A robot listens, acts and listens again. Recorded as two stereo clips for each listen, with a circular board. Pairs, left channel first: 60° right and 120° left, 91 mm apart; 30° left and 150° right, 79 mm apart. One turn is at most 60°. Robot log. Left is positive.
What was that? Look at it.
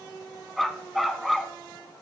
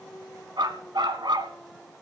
note: The dog barking: 150° right.
cmd yaw -60
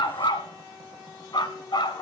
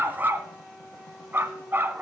note: The dog barking is now 90° right.
cmd yaw -60
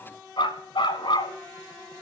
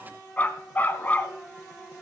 note: The dog barking is now 35° right.
cmd yaw -35
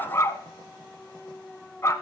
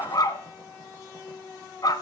end: Found it: a dog barking, straight ahead.